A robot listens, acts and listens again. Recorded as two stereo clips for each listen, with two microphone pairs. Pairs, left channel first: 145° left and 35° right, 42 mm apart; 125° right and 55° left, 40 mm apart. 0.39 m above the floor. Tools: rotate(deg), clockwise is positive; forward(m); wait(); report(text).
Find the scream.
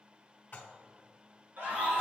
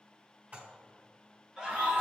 rotate(10)
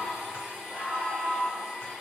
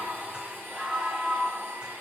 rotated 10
report("Found it: a scream, straight ahead.")